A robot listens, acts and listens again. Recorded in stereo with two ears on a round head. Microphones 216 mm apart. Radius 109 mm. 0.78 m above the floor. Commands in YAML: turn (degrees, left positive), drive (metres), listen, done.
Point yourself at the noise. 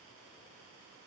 listen: true
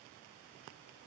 listen: true
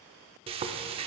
turn: -25
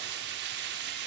turn: -130
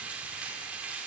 done: "Facing the frying, under 1 m away."